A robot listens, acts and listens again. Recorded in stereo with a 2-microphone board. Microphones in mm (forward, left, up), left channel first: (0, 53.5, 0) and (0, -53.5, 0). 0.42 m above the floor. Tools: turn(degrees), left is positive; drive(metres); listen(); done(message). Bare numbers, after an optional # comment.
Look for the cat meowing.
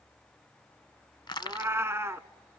# The cat meowing: about 25° right or 155° right.
turn(-25)
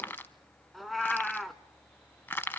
done("Found it: a cat meowing, straight ahead, under 1 m away.")